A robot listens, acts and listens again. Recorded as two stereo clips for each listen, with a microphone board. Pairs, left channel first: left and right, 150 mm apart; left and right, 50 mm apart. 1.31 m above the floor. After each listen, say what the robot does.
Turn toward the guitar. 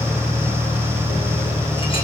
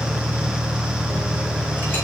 Keep listening.
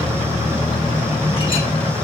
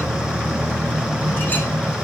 Keep listening.
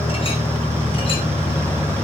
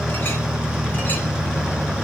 I can't make out a guitar.